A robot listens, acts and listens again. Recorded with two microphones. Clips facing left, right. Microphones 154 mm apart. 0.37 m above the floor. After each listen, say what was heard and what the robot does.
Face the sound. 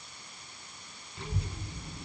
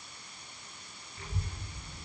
The child speaking: about 75° left or 105° left. Turn 75° left.
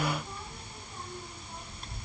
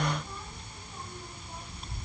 Found it: a child speaking, straight ahead, 2 to 4 m away.